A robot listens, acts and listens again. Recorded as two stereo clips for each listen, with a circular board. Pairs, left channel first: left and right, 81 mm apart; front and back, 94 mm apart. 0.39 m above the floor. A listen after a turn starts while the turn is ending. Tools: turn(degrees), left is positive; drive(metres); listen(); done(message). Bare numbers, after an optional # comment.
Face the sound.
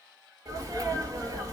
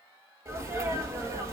# The sneeze: 125° right.
turn(-125)
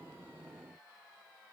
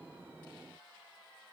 done("I heard a sneeze from this way, but can't make it out now.")